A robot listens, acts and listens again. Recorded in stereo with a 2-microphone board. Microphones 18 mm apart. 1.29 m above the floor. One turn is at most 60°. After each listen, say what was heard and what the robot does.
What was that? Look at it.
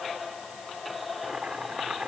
Turn 60° right.
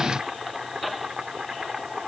So it is at 45° right. Turn 45° right.
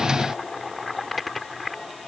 Found it: boiling, straight ahead.